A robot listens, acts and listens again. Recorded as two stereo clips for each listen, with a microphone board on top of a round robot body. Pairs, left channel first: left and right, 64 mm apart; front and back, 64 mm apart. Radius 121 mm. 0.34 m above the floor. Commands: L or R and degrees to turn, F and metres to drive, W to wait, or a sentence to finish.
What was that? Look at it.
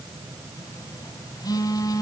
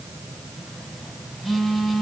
L90
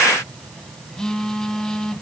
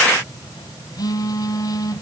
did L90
L10
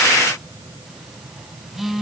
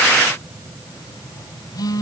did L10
Facing the phone buzzing, 2 to 4 m away.